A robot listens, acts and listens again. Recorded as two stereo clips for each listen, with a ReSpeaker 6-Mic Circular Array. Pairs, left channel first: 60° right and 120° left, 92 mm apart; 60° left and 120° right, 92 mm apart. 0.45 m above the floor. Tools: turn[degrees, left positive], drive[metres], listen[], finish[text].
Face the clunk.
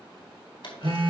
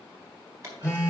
Thought: The clunk: 65° right.
Action: turn[-65]
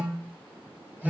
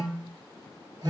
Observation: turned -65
Action: finish[Facing where the clunk came from. I can't hear it now.]